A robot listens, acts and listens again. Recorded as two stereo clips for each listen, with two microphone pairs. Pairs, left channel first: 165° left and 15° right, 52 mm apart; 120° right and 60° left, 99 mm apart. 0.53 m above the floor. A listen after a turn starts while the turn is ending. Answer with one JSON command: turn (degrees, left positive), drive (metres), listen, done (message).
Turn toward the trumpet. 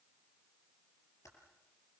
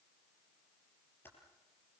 {"listen": true}
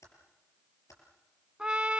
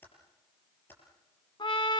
{"turn": -85}
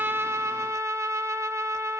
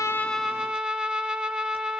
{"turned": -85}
{"turn": -15}
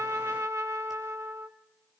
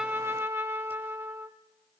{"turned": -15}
{"done": "Found it: a trumpet, straight ahead."}